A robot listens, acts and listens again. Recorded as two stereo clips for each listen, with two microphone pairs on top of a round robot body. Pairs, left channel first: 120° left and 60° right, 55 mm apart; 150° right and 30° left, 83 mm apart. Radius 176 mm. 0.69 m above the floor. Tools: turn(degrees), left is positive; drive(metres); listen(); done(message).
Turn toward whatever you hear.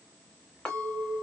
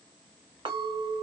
turn(degrees=45)
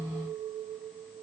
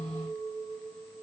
turn(degrees=-10)
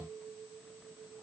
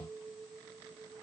done("Found it: a clink, straight ahead, 1 to 2 m away.")